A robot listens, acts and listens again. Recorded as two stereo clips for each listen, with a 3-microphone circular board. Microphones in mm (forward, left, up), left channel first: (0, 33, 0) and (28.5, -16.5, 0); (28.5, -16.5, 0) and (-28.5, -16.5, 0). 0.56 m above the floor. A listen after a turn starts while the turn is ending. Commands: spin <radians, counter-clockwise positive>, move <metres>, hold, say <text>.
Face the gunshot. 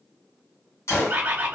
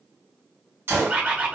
spin 2.53
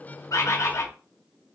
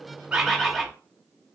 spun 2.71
spin -0.17
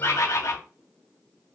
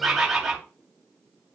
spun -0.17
say Facing where the gunshot came from. I can't hear it now.